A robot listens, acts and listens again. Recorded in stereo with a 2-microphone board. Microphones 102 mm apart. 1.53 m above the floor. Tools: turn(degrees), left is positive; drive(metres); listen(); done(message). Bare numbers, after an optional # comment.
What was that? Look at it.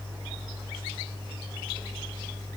listen()
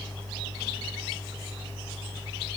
listen()
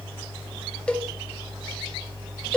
turn(30)
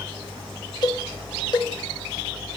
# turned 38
# So it is at 130° left.
turn(130)
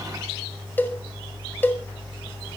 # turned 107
# The cowbell is now 20° left.
turn(20)
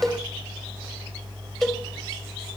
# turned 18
done("Facing the cowbell.")